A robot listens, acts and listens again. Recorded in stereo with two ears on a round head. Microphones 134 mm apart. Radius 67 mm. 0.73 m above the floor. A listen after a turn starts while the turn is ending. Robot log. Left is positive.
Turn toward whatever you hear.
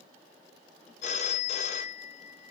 note: The phone ringing: about 45° left or 135° left.
cmd yaw +45
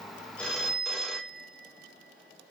end: Facing the phone ringing, under 1 m away.